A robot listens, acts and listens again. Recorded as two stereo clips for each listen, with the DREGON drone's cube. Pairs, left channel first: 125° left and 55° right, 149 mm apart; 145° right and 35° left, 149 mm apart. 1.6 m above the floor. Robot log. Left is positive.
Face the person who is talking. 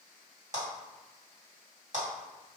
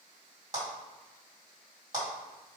cmd idle
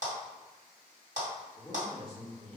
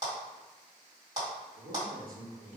note: The man speaking: 40° left.
cmd yaw +40
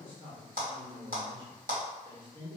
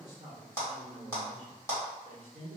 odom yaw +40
end: Facing the man speaking, 1 to 2 m away.